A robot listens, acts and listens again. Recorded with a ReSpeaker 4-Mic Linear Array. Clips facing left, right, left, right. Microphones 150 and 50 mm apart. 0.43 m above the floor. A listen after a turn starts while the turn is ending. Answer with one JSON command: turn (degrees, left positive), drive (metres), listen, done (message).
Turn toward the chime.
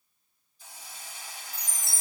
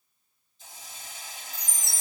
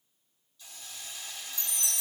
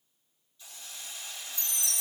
{"turn": -50}
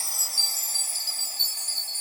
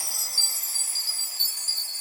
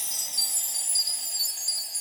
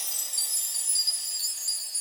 {"done": "Found it: a chime, straight ahead, 1 to 2 m away."}